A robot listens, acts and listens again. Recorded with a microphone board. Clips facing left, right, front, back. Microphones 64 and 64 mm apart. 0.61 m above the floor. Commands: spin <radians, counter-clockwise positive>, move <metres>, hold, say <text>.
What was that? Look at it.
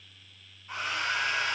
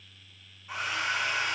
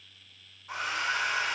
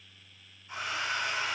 say Found it: a hair dryer, straight ahead, 1 to 2 m away.